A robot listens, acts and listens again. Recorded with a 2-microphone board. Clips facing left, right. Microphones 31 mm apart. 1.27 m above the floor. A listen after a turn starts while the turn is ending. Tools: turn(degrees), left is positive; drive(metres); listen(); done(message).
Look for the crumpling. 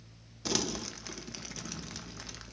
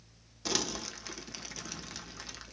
turn(degrees=-30)
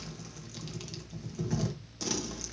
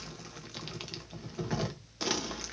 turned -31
turn(degrees=-145)
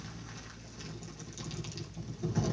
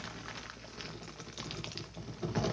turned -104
turn(degrees=-40)
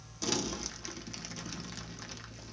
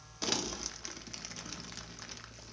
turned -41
done("Facing the crumpling, 1 to 2 m away.")